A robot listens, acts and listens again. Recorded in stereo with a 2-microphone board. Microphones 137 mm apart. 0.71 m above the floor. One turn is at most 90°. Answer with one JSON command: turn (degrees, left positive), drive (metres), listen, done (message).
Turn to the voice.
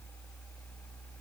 {"listen": true}
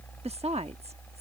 {"turn": -50}
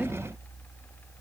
{"listen": true}
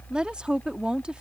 {"turn": -10}
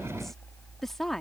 {"done": "Facing the woman speaking."}